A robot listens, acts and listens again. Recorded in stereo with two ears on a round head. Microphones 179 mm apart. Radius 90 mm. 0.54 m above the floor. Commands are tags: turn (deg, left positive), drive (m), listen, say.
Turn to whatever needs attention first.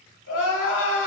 <turn deg="65"/>
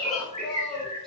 <say>Facing the crying, under 1 m away.</say>